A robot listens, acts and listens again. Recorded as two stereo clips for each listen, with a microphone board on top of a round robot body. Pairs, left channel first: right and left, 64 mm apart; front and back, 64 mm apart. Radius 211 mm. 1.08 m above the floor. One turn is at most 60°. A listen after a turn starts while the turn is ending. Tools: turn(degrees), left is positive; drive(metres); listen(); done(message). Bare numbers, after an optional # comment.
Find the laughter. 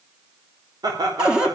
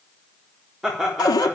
# The laughter: 95° left.
turn(60)
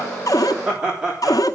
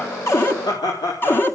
# The laughter is now 10° left.
turn(10)
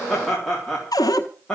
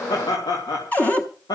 # The laughter is now 10° right.
turn(-10)
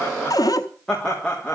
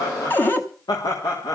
# The laughter is now 15° right.
turn(-15)
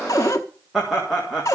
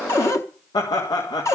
done("Facing the laughter.")